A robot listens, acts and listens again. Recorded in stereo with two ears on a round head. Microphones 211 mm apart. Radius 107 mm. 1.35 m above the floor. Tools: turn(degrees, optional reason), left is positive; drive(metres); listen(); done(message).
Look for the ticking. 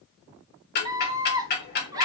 turn(degrees=45, reason="The ticking: about 45° left or 135° left.")
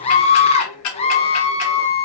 turn(degrees=95, reason="So it is at 95° left.")
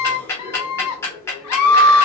turn(degrees=10, reason="The ticking is now 10° left.")
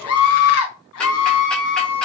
listen()
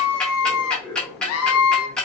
done("Facing the ticking.")